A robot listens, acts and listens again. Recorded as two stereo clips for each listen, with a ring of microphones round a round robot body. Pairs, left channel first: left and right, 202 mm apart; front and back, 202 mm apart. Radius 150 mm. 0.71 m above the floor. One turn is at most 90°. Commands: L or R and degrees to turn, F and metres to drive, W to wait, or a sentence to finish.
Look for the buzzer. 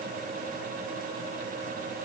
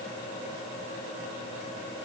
W
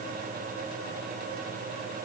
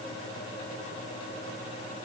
W
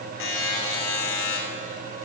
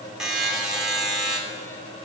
L90
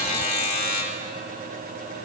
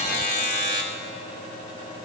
L35
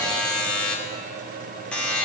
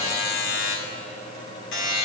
Found it: a buzzer, straight ahead.